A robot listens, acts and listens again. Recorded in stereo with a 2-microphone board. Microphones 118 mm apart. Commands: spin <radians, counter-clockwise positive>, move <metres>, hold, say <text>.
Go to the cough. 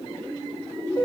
hold
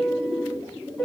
hold
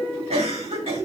spin -1.05
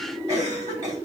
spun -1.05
spin -0.61
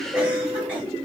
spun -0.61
hold
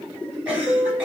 spin -0.26
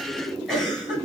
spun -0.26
move 1.0
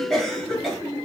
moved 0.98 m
move 1.0
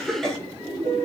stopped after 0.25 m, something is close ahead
spin 0.17
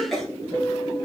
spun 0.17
say I am next to the cough.